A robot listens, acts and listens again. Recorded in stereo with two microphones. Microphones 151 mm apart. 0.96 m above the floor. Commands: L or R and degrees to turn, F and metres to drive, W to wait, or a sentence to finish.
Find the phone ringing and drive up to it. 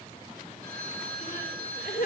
R90
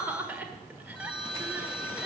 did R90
F1.0
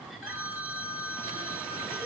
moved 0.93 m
R10
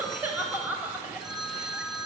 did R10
F1.0
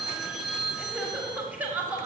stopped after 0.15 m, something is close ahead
Arrived at the phone ringing, straight ahead.